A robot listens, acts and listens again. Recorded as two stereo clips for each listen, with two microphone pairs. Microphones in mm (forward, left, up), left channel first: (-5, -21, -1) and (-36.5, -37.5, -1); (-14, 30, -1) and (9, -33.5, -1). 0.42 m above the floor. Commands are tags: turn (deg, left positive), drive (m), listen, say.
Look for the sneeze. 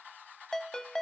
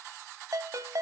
<listen/>
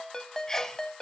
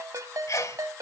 <turn deg="100"/>
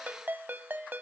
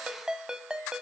<say>Facing where the sneeze came from. I can't hear it now.</say>